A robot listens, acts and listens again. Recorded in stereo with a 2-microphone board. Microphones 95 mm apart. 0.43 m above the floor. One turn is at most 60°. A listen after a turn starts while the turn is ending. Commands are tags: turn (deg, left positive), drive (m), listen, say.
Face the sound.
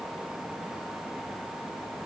<listen/>
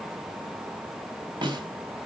<turn deg="-55"/>
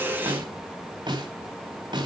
<turn deg="-60"/>
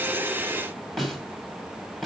<say>Found it: a snare drum, straight ahead.</say>